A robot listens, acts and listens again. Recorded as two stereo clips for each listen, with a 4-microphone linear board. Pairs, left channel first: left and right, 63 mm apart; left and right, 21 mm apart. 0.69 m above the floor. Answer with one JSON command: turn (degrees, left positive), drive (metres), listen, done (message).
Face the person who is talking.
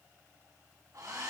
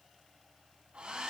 {"listen": true}
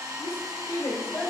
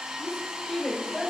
{"turn": 50}
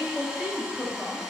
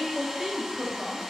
{"done": "Found it: a woman speaking, straight ahead, over 4 m away."}